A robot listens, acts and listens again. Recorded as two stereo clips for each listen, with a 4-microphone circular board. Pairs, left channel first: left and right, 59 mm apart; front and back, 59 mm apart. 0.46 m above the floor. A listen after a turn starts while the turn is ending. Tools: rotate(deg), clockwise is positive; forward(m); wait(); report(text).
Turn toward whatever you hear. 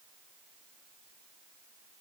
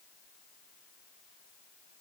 wait()
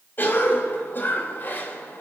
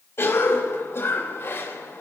rotate(-40)
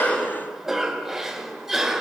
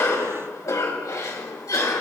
report("Found it: a cough, straight ahead, 2 to 4 m away.")